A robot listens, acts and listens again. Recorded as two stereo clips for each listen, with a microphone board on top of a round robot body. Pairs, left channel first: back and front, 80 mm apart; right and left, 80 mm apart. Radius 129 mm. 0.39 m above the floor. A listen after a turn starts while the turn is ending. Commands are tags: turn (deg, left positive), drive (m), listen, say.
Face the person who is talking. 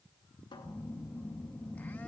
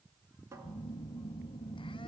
<listen/>
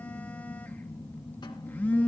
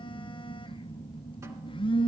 <listen/>
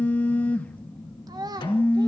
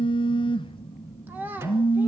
<turn deg="25"/>
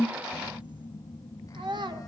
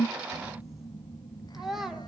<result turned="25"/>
<say>Facing the child speaking.</say>